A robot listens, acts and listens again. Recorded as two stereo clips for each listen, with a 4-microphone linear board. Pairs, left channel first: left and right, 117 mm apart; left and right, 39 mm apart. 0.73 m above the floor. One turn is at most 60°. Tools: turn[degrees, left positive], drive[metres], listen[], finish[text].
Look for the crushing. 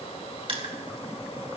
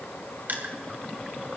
Thought: The crushing: about 55° right or 125° right.
Action: turn[-55]
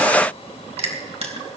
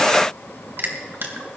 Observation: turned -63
Thought: So it is at 65° right.
Action: turn[-60]
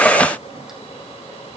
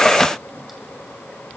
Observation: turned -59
Action: listen[]
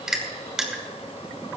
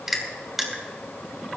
Action: finish[Facing the crushing.]